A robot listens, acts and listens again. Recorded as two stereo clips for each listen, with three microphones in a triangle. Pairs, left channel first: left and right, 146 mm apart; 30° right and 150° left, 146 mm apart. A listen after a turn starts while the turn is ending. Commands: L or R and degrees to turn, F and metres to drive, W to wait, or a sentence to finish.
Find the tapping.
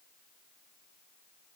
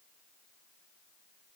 W
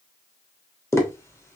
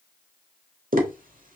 L160
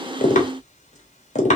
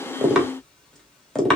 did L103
L55
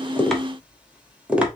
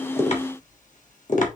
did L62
R10
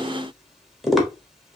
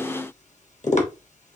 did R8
Facing the tapping, 1 to 2 m away.